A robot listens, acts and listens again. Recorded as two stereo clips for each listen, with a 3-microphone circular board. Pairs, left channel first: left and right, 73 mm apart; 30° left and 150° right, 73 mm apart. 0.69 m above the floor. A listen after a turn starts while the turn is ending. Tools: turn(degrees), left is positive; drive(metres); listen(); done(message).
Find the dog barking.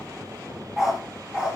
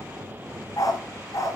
turn(degrees=-10)
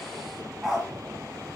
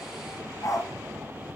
turn(degrees=-10)
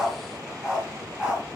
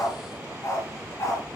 turn(degrees=-10)
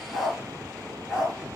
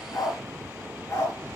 turn(degrees=-10)
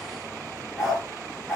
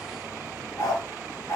done("Found it: a dog barking, straight ahead.")